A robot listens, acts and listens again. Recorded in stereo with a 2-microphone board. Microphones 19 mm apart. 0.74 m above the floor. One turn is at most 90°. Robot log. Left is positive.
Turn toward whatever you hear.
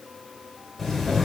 cmd yaw +30
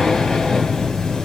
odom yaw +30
note: So it is at 145° left.
cmd yaw +90
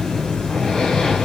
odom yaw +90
note: The breathing is now 50° left.
cmd yaw +50
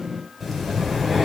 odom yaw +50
end: Facing the breathing.